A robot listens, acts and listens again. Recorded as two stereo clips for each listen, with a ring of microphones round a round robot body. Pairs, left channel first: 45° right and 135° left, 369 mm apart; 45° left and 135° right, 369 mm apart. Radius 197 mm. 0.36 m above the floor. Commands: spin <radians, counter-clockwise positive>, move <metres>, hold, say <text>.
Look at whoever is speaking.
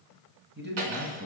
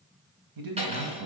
spin -2.88
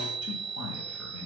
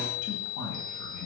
say Facing the man speaking.